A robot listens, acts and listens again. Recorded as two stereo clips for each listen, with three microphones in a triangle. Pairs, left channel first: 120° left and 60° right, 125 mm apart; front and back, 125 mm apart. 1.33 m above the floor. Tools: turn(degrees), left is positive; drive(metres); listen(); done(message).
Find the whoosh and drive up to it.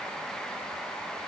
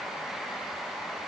listen()
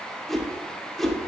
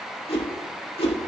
turn(degrees=35)
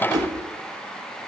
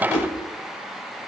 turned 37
drive(metres=1.0)
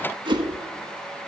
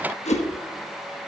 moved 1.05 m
turn(degrees=-10)
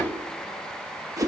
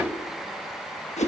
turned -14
drive(metres=1.0)
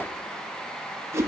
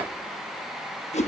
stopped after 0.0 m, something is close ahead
done("I am next to the whoosh.")